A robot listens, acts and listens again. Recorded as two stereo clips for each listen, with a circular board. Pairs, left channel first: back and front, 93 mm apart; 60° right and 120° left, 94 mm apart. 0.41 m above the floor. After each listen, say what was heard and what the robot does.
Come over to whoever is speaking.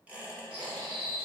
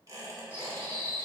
Keep listening.
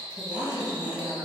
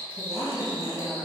The woman speaking: 40° right. Turn 40° right.
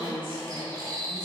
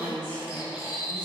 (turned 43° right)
Drive 1.0 m forward.
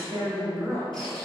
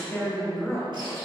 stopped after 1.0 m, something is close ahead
Arrived at the woman speaking, straight ahead.